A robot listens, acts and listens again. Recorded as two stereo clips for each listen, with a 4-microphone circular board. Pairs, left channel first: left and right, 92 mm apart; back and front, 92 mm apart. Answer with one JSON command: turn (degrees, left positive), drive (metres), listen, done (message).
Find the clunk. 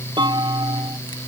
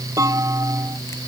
{"turn": -55}
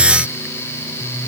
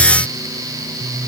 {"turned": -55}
{"done": "Facing where the clunk came from. I can't hear it now."}